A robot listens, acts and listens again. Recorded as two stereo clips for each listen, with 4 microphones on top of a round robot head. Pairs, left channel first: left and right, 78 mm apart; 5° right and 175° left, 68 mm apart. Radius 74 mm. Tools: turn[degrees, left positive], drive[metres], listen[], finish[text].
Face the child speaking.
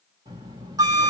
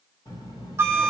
Thought: The child speaking: 45° right.
Action: turn[-45]
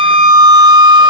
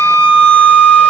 Action: listen[]
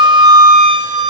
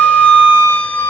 Action: listen[]
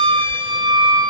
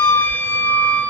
Thought: The child speaking is now 40° left.
Action: turn[40]
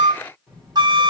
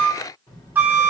Action: finish[Facing the child speaking.]